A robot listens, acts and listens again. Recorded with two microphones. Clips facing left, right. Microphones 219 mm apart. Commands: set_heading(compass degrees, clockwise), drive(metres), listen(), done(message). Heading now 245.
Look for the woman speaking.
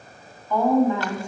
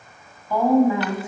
set_heading(275)
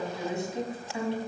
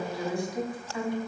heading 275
set_heading(250)
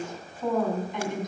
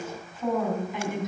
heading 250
done("Found it: a woman speaking, straight ahead.")